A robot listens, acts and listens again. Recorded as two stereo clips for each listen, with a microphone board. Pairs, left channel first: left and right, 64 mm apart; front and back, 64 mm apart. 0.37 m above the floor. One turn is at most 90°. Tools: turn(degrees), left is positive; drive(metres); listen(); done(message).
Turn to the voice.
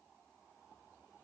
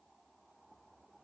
listen()
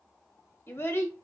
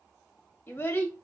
turn(degrees=45)
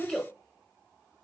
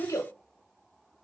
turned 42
done("Facing the child speaking.")